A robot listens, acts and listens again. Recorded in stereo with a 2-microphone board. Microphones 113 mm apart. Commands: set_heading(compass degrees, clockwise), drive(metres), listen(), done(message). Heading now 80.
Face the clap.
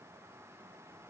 listen()
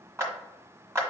set_heading(105)
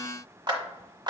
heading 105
set_heading(235)
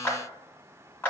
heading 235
set_heading(210)
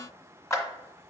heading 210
set_heading(180)
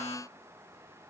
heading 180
listen()
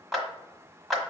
done("Found it: a clap, straight ahead.")